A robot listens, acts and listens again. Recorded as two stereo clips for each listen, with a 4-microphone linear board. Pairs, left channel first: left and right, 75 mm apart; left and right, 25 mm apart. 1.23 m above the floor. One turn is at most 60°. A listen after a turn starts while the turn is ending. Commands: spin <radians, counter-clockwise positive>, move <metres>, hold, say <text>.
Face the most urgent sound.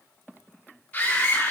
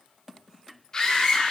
spin 0.35
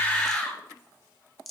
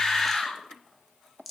say Found it: a scream, straight ahead, 2 to 4 m away.